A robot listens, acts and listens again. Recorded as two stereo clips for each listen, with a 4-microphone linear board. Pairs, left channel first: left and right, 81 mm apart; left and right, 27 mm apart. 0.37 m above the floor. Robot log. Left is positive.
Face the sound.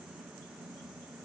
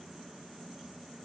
cmd idle
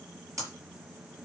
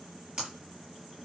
note: The breaking glass: about 40° right or 140° right.
cmd yaw -40
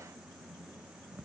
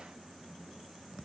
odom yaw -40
cmd idle
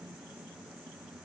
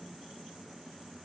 end: I heard breaking glass, but can't make it out now. It was about straight ahead or 100° right.